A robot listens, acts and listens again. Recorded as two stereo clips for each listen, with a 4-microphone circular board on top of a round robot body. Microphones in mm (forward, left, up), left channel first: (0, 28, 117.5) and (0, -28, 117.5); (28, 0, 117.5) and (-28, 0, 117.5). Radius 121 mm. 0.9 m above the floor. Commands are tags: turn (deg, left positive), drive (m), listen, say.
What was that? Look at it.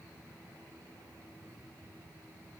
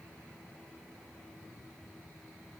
<listen/>
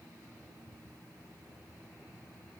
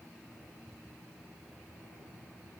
<listen/>
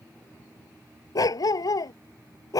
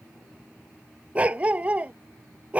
<turn deg="110"/>
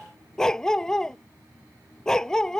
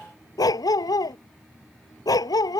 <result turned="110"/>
<turn deg="10"/>
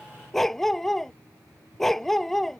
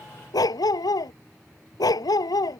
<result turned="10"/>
<say>Found it: a dog barking, straight ahead.</say>